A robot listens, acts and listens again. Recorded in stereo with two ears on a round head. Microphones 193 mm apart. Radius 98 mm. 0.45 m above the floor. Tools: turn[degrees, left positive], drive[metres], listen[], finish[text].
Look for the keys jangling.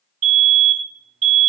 Action: listen[]
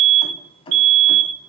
Thought: The keys jangling: about 25° left or 155° left.
Action: turn[25]
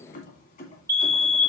Thought: The keys jangling: about 40° left or 140° left.
Action: turn[40]
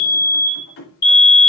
Thought: So it is at 110° left.
Action: turn[110]
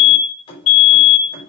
Thought: The keys jangling is now 25° left.
Action: turn[25]
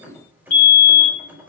Thought: The keys jangling is now 10° right.
Action: turn[-10]
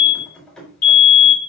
Action: finish[Found it: keys jangling, straight ahead.]